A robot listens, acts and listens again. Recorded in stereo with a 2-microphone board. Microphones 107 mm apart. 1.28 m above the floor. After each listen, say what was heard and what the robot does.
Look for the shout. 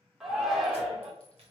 Turn 30° right.
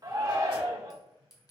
So it is at 145° right. Turn 145° right.
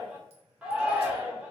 The shout is now 10° right. Turn 10° right.
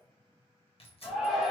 Found it: a shout, straight ahead, under 1 m away.